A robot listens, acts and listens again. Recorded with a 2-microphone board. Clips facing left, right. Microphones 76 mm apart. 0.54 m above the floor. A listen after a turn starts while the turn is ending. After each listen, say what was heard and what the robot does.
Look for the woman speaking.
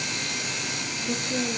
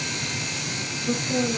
The woman speaking: about 45° right or 135° right. Turn 45° right.
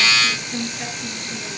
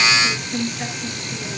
Facing the woman speaking, over 4 m away.